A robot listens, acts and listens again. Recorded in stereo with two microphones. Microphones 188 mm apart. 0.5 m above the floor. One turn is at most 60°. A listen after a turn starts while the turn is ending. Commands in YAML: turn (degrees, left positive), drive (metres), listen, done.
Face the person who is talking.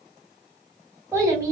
turn: -15
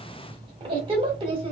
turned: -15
turn: -60
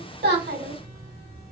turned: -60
turn: -60
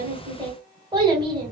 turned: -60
turn: -25
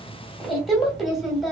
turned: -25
done: "Found it: a child speaking, straight ahead."